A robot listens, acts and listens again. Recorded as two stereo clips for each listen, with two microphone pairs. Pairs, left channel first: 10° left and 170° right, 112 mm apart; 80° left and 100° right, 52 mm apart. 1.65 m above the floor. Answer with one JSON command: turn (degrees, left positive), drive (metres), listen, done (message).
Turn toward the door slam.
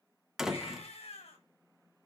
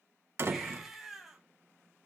{"turn": -80}
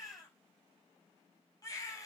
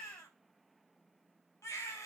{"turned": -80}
{"done": "I heard a door slam from this way, but can't make it out now."}